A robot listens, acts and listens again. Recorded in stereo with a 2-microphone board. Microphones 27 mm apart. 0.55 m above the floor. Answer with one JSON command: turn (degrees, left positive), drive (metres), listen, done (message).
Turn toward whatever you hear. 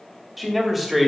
{"turn": -30}
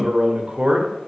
{"turn": -140}
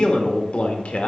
{"turn": 55}
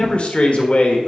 {"turn": 55}
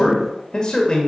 {"turn": 30}
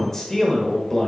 {"turn": 15}
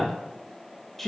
{"done": "Found it: a man speaking, straight ahead, 1 to 2 m away."}